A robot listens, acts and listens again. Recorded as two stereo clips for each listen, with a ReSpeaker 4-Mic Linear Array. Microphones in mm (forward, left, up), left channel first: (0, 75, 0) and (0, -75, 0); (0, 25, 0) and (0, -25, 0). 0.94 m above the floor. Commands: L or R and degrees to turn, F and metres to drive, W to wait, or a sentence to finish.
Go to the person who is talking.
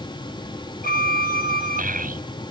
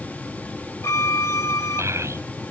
R70
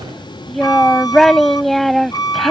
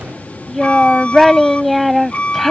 F1.0
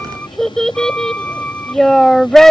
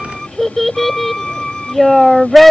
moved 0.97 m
F1.0
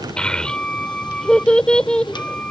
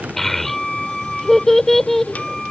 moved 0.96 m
F1.0
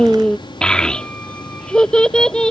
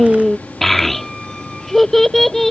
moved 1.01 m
F1.0
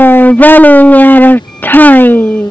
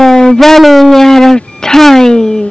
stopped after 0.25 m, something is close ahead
L15
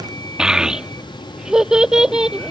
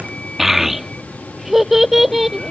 I am next to the child speaking.